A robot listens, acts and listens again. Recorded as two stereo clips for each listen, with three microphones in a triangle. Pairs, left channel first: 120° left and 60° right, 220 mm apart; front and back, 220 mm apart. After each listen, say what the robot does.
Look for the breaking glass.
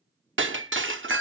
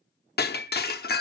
Turn 40° right.
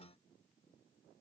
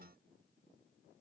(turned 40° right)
Facing where the breaking glass came from. I can't hear it now.